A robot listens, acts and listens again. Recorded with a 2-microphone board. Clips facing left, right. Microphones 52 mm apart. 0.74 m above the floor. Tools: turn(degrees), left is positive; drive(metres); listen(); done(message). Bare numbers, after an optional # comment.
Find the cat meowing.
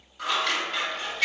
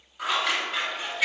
listen()
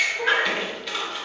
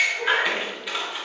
# The cat meowing: about 25° left or 155° left.
turn(25)
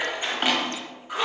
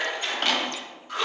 listen()
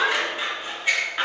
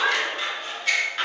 # So it is at 130° left.
turn(130)
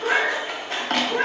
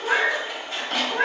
# The cat meowing is now 35° left.
turn(35)
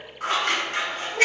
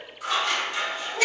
listen()
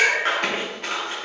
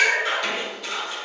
# The cat meowing is now 10° left.
turn(10)
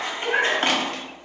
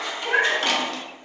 done("Facing the cat meowing.")